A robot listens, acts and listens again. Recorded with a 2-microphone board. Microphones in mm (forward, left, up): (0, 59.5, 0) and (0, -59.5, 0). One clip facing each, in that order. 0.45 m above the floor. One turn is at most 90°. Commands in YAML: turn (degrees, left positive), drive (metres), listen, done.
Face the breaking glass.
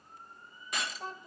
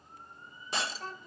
turn: -30
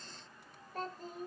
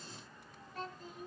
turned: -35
listen: true
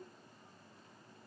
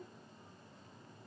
done: "I heard breaking glass, but can't make it out now. It was about 5° left or 115° right."